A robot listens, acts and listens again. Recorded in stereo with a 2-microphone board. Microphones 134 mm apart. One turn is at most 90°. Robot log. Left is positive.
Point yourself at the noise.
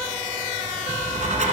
note: The writing: about 65° right or 115° right.
cmd yaw -65
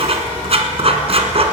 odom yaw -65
note: So it is at 50° right.
cmd yaw -50
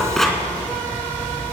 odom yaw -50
end: Found it: writing, straight ahead, 1 to 2 m away.